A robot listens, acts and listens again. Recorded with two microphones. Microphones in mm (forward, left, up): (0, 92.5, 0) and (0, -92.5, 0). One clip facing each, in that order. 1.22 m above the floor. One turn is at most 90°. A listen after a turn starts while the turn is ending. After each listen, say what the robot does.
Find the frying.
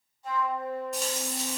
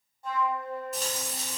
Turn 30° left.
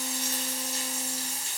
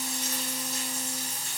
Turn 90° left.
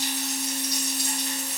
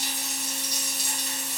Turn 50° left.
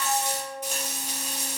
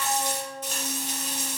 Turn 10° left.
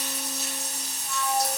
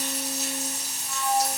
Facing the frying.